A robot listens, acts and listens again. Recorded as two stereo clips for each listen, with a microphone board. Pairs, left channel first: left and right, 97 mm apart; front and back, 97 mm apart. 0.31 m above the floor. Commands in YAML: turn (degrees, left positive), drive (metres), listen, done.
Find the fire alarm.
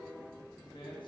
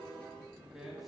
listen: true
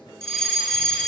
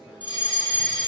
done: "Facing the fire alarm, over 4 m away."